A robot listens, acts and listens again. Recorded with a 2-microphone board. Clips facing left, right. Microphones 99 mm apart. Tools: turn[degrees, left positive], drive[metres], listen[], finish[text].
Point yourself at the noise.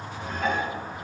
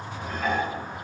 Action: turn[-30]
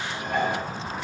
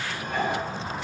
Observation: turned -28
Thought: So it is at 25° left.
Action: turn[25]
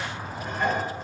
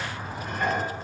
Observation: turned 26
Action: finish[Found it: dishes clattering, straight ahead.]